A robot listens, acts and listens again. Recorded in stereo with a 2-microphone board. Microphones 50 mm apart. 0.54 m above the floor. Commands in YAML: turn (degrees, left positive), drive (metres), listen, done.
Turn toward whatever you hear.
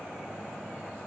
listen: true
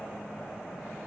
listen: true
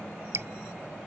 turn: -65
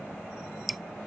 done: "Facing the dripping."